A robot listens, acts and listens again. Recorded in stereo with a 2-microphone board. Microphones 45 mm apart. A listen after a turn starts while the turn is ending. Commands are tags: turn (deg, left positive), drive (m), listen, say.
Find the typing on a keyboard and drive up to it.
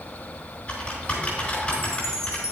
<turn deg="30"/>
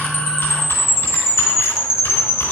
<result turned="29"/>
<listen/>
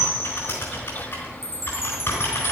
<turn deg="120"/>
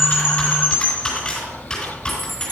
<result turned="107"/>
<turn deg="15"/>
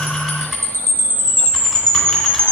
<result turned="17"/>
<listen/>
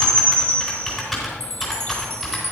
<drive m="1.0"/>
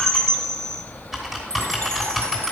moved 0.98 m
<drive m="1.0"/>
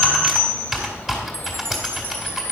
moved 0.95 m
<turn deg="-10"/>
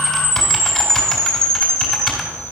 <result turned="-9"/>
<drive m="1.0"/>
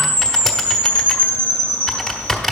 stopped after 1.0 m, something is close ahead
<say>I am next to the typing on a keyboard.</say>